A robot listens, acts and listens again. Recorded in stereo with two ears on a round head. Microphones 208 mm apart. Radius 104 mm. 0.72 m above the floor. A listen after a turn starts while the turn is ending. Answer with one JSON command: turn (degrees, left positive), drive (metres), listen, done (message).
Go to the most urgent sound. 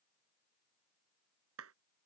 {"listen": true}
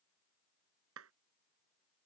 {"listen": true}
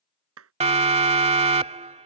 {"turn": -30}
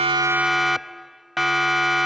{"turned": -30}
{"drive": 1.0}
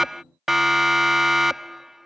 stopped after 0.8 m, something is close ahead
{"done": "Arrived at the siren, straight ahead."}